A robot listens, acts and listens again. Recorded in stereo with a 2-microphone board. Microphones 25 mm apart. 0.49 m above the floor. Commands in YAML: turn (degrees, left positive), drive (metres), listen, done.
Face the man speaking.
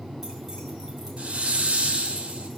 listen: true
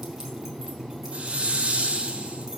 listen: true
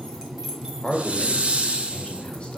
turn: 50
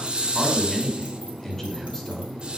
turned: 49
turn: 15
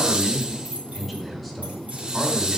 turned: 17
done: "Facing the man speaking, 2 to 4 m away."